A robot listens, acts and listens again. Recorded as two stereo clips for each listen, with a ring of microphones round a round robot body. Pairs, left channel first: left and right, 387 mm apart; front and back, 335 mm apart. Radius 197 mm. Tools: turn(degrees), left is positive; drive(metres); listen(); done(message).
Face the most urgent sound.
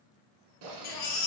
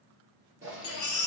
turn(degrees=50)
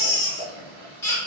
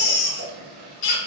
done("Facing the baby crying, under 1 m away.")